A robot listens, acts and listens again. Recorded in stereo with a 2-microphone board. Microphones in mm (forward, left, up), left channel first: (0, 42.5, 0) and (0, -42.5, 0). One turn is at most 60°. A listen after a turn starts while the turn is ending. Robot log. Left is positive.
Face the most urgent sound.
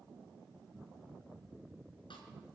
cmd idle
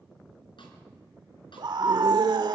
note: The scream: about 60° right or 120° right.
cmd yaw -60
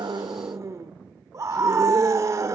note: So it is at 45° right.
cmd yaw -45
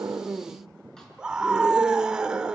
note: The scream is now 10° right.
cmd yaw -10
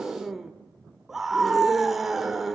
end: Facing the scream.